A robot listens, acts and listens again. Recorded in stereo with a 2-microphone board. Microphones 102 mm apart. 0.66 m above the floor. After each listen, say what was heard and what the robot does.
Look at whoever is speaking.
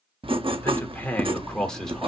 Turn 30° left.
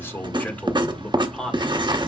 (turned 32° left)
Turn 30° left.
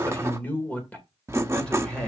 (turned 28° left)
Turn 30° left.
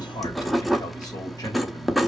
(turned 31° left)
Keep listening.
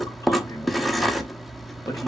Keep listening.
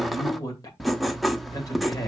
So it is at 145° left. Turn 145° left.
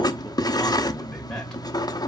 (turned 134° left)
Nothing new. It was at 10° left. Turn 10° left.
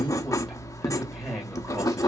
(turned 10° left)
Facing the man speaking.